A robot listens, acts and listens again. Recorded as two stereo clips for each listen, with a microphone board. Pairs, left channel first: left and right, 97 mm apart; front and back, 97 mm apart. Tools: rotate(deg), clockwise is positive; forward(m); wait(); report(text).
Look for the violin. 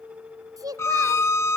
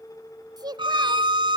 rotate(-150)
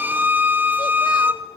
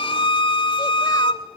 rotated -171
rotate(20)
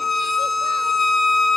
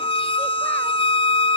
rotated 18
report("Facing the violin, 1 to 2 m away.")